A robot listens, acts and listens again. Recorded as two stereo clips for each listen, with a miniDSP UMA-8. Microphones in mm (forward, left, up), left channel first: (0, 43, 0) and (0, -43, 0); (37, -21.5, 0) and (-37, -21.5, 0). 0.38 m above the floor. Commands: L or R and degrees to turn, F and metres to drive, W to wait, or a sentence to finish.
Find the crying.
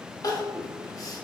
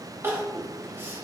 L125
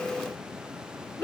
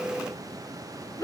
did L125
L35
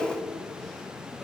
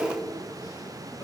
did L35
W
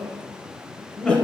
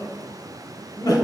L10
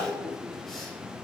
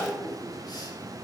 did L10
W
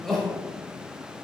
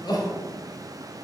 Found it: crying, straight ahead, under 1 m away.